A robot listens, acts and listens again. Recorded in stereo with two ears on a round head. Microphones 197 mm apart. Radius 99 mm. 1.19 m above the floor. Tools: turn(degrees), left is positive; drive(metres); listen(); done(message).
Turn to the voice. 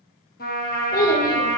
turn(degrees=40)
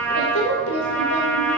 turn(degrees=100)
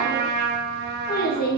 turn(degrees=40)
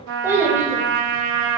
turn(degrees=-10)
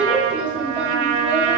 done("Facing the child speaking.")